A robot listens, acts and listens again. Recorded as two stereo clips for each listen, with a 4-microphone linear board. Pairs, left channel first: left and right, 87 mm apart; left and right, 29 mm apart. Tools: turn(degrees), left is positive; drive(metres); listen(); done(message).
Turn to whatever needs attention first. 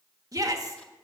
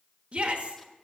turn(degrees=-40)
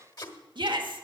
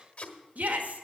turn(degrees=-95)
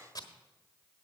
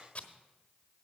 listen()
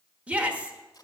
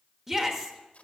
turn(degrees=-20)
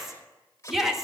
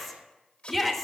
done("Facing the shout, 1 to 2 m away.")